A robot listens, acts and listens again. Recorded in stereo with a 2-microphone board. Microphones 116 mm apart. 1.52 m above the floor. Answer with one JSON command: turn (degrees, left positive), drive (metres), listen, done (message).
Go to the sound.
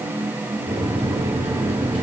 {"turn": -70}
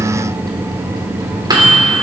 {"turn": -40}
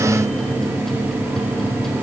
{"drive": 1.0}
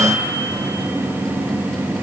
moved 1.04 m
{"drive": 1.0}
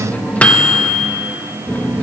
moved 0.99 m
{"turn": 15}
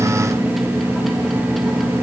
{"drive": 1.0}
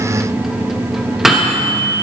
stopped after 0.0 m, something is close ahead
{"done": "I am next to the microwave."}